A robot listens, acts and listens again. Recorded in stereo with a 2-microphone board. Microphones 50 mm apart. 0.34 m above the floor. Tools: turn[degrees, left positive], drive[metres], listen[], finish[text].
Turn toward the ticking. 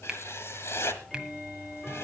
Action: turn[30]
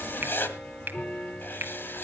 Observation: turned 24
Thought: So it is at 150° left.
Action: turn[150]
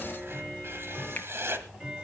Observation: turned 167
Thought: The ticking is now 15° right.
Action: turn[-15]
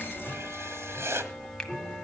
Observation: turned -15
Action: finish[Facing the ticking.]